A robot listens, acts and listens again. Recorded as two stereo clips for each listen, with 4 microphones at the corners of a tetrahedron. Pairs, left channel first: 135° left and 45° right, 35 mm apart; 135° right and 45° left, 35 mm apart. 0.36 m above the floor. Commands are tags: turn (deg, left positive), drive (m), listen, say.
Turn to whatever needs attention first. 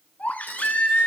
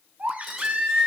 <turn deg="90"/>
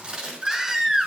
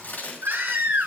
<turn deg="35"/>
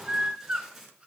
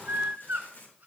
<turn deg="15"/>
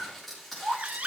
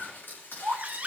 <say>Found it: a baby crying, straight ahead, 1 to 2 m away.</say>